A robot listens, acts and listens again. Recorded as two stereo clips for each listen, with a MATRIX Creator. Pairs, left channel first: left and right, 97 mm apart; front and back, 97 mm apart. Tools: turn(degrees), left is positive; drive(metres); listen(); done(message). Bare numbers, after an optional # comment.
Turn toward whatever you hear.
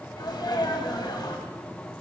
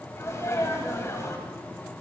# The sneeze: 55° left.
turn(55)
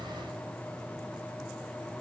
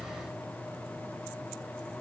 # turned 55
done("I heard a sneeze from this way, but can't make it out now.")